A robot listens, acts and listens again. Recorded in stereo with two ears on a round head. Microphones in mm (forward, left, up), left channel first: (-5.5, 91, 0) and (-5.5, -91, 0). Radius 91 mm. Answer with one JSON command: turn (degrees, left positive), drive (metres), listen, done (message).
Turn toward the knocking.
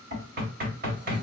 {"turn": -45}
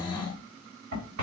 {"turn": -85}
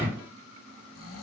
{"turn": -10}
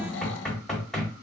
{"done": "Facing the knocking, 1 to 2 m away."}